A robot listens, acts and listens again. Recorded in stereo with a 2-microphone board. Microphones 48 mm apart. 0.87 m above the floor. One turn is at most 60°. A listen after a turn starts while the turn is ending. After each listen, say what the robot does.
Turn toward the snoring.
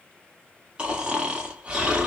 Turn 20° right.
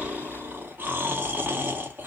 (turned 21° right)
Turn 60° right.
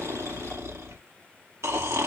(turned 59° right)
Turn 60° right.
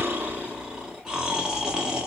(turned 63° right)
Turn 20° right.
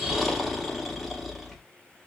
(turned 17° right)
Found it: snoring, straight ahead, 1 to 2 m away.